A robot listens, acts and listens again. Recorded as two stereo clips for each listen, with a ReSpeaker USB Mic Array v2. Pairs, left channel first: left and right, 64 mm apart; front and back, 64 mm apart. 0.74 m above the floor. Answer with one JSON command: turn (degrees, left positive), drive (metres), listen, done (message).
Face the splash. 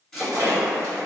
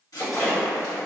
{"turn": -85}
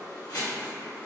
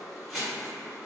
{"done": "I heard a splash from this way, but can't make it out now."}